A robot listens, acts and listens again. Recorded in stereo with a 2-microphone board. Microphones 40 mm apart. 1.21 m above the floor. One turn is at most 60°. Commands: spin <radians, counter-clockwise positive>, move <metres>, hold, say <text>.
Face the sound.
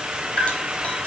spin 0.52
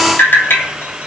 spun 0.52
spin 1.05
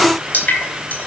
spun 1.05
spin 0.87
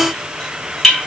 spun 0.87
spin 0.26
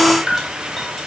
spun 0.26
say Facing the dripping.